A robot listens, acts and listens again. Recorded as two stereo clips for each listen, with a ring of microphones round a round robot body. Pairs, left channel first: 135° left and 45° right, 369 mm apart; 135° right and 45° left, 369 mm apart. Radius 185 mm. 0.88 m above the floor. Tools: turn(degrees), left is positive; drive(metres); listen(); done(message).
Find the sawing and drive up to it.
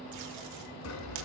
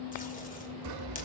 turn(degrees=85)
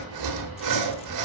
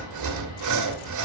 drive(metres=1.0)
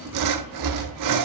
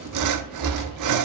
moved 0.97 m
drive(metres=1.0)
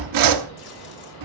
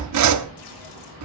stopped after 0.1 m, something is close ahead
done("Arrived at the sawing, straight ahead.")